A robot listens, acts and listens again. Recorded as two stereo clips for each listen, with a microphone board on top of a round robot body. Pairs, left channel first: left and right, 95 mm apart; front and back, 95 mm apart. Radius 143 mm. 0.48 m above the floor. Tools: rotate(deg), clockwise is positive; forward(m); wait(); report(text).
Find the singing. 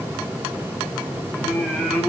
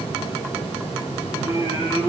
report("Found it: singing, straight ahead, 2 to 4 m away.")